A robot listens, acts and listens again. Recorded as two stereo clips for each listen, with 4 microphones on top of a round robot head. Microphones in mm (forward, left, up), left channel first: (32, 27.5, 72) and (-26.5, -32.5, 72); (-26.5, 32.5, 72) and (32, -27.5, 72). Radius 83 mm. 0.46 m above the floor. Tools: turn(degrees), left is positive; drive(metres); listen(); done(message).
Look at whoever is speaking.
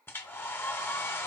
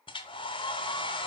listen()
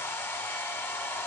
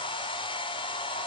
listen()
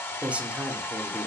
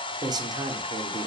turn(degrees=-60)
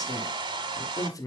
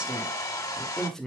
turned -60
turn(degrees=55)
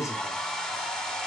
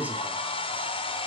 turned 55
turn(degrees=15)
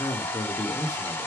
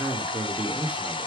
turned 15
turn(degrees=25)
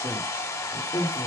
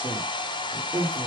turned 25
turn(degrees=15)
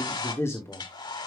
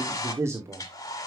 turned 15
done("Found it: a man speaking, straight ahead.")